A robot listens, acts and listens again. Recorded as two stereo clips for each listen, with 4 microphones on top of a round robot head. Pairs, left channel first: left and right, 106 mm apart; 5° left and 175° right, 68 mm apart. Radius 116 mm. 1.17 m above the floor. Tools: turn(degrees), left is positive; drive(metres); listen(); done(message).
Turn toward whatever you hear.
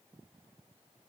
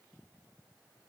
listen()
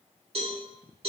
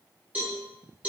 turn(degrees=-110)
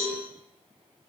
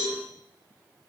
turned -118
done("Facing the cowbell, 1 to 2 m away.")